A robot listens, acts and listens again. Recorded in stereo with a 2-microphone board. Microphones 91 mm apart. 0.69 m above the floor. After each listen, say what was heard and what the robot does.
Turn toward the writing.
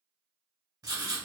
The writing: about 45° right or 135° right. Turn 45° right.
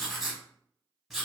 Facing the writing, under 1 m away.